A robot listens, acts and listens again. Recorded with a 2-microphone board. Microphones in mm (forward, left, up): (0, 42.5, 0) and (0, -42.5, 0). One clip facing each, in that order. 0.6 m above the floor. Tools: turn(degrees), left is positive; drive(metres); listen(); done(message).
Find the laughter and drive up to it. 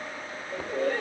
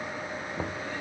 turn(degrees=90)
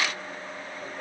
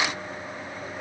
listen()
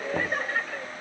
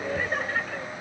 drive(metres=1.0)
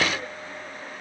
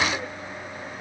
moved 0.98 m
listen()
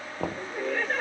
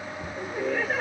drive(metres=1.0)
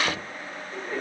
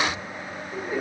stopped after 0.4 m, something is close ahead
turn(degrees=-15)
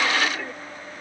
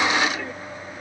done("I am next to the laughter.")